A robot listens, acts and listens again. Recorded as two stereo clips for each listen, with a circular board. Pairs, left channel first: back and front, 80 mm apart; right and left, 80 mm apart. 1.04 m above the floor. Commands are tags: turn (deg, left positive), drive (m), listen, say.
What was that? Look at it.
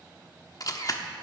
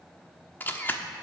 <turn deg="-150"/>
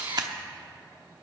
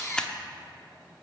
<turn deg="-10"/>
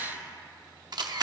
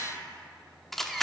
<say>Facing the camera shutter, under 1 m away.</say>